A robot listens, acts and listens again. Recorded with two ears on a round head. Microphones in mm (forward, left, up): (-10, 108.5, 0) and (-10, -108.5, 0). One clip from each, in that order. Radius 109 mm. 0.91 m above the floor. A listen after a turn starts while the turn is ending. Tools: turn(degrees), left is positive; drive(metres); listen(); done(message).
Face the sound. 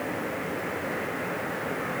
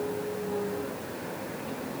listen()
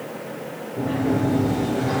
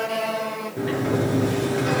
turn(degrees=-55)
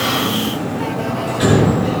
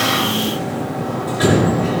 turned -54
done("Found it: a sliding door, straight ahead.")